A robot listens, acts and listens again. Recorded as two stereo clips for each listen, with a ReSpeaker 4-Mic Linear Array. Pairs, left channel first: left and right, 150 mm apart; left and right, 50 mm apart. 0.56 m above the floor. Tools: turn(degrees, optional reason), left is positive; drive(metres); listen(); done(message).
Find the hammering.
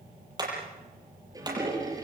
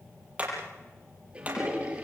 turn(degrees=-25, reason="The hammering: about 25° right or 155° right.")
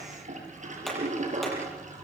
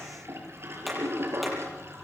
listen()
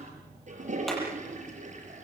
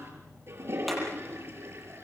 listen()
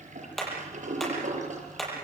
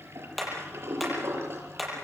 done("Facing the hammering.")